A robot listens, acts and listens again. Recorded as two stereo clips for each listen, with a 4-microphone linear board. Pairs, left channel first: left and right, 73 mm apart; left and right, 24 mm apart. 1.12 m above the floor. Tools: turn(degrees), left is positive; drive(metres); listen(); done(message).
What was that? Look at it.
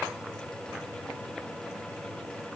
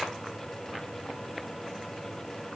listen()
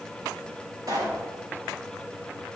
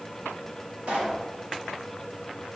turn(degrees=-60)
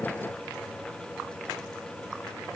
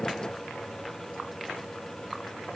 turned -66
listen()
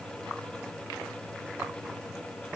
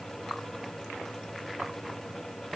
done("I heard a pop, but can't make it out now. It was about 10° left or 55° right.")